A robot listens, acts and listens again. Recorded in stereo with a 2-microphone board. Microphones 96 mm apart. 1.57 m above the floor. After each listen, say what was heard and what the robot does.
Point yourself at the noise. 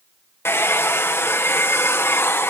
The hair dryer: about 25° left or 155° left. Turn 25° left.
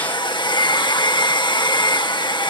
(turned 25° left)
So it is at 130° left. Turn 130° left.
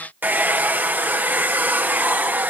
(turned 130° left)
The hair dryer is now 20° right. Turn 20° right.
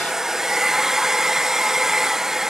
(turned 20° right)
Facing the hair dryer.